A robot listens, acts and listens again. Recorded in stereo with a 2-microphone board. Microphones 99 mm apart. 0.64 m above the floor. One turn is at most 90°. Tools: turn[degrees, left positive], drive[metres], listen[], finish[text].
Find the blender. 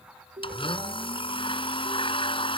Thought: The blender: about 60° left or 120° left.
Action: turn[60]
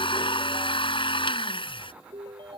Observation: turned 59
Thought: So it is at 60° left.
Action: turn[60]
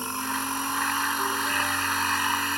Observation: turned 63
Action: finish[Found it: a blender, straight ahead.]